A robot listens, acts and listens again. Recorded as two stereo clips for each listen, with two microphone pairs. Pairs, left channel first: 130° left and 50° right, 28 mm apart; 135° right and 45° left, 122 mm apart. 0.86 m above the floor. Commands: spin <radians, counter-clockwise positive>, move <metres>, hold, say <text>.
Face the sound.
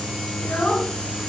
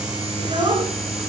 spin 1.57
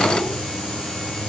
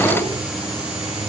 hold
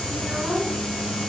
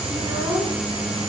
spin -0.17
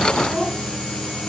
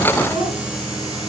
say Found it: a child speaking, straight ahead, over 4 m away.